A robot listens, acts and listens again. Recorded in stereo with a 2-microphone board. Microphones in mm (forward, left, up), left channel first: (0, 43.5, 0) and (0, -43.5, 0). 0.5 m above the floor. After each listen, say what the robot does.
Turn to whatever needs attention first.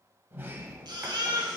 Turn 60° right.
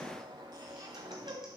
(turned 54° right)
Keep listening.
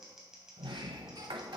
Keep listening.
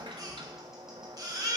Turn 60° right.
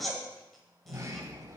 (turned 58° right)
Found it: a baby crying, straight ahead.